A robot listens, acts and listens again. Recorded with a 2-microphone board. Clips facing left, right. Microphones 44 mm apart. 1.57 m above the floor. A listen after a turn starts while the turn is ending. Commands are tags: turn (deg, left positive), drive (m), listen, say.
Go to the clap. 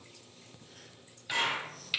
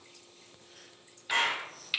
<turn deg="-65"/>
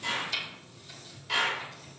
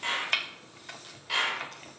<drive m="1.0"/>
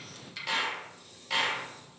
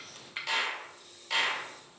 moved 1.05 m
<drive m="1.0"/>
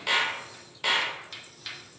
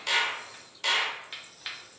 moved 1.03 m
<turn deg="15"/>
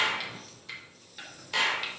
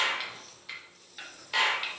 <drive m="1.0"/>
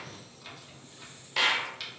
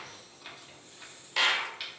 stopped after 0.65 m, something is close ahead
<say>I am next to the clap.</say>